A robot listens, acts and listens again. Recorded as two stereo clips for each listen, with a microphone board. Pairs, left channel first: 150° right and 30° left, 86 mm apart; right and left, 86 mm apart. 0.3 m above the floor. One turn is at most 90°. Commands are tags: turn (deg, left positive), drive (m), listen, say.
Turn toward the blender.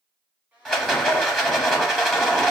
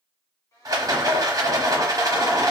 <turn deg="-40"/>
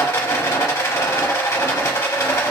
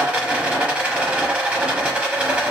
<listen/>
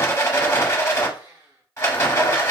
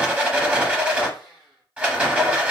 <say>Facing the blender.</say>